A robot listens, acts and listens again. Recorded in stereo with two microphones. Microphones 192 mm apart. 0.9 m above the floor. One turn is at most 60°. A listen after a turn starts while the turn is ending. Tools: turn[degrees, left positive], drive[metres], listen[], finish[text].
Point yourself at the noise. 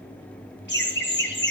Thought: The laughter: about 65° left or 115° left.
Action: turn[60]
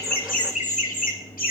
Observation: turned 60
Thought: So it is at 45° left.
Action: turn[45]
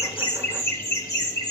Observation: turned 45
Thought: The laughter is now 20° left.
Action: turn[20]
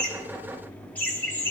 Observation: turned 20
Thought: The laughter is now 10° left.
Action: turn[10]
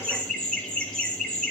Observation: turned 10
Action: finish[Found it: laughter, straight ahead, 2 to 4 m away.]